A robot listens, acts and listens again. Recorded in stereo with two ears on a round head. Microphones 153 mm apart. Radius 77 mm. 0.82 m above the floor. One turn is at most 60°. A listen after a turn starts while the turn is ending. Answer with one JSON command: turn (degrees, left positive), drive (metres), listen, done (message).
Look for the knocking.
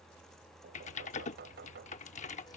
{"turn": -60}
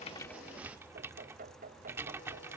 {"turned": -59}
{"turn": -50}
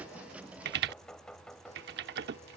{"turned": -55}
{"done": "Found it: knocking, straight ahead."}